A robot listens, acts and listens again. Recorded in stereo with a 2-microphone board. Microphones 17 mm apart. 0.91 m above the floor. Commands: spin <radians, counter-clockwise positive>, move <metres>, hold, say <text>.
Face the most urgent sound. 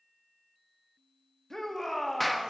spin 0.52
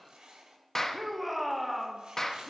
say Facing the shout.